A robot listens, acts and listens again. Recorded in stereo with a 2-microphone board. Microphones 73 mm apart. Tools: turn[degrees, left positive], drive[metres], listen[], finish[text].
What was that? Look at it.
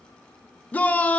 Thought: The shout: about 20° left or 160° left.
Action: turn[20]
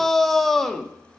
Action: finish[Facing the shout, under 1 m away.]